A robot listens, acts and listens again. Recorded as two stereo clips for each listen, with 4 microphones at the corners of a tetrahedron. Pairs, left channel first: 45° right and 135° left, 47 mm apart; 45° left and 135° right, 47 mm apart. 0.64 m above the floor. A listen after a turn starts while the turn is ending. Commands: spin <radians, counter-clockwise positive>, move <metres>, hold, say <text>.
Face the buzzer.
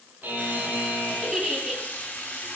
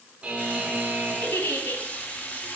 spin 2.88
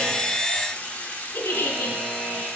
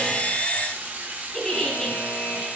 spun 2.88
spin 1.31
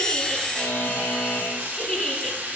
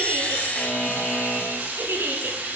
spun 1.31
spin -0.17
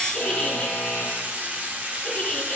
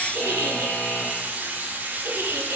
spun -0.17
say Found it: a buzzer, straight ahead.